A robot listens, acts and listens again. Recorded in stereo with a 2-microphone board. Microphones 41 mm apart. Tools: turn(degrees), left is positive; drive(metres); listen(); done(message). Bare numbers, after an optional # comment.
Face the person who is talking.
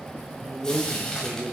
# The man speaking: about 25° right or 155° right.
turn(-25)
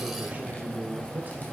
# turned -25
# So it is at 135° right.
turn(-135)
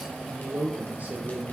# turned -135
# The man speaking is now 40° right.
turn(-40)
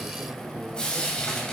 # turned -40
listen()
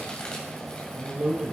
# The man speaking is now 15° right.
turn(-15)
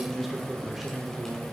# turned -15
done("Facing the man speaking, 2 to 4 m away.")